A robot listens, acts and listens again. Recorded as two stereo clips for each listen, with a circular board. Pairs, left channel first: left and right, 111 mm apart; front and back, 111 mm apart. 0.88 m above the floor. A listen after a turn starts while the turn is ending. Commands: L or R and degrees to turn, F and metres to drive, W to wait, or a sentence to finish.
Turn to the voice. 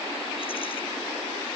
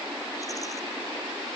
W
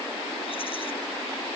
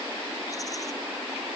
W
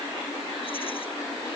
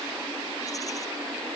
I can't make out anyone speaking.